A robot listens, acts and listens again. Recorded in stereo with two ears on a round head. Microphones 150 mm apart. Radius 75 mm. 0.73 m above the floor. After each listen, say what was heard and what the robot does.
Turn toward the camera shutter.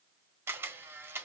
Turn 30° right.
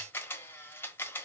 So it is at 15° left. Turn 15° left.
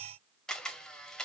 Found it: a camera shutter, straight ahead, 1 to 2 m away.